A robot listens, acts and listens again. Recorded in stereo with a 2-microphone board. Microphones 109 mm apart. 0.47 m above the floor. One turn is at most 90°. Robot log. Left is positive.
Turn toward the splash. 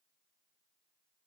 cmd idle
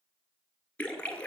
cmd yaw +30
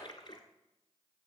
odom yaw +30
note: So it is at 135° left.
cmd yaw +90
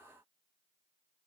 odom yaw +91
note: Nothing new. It was at 45° left.
cmd yaw +45
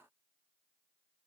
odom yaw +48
end: I heard a splash from this way, but can't make it out now.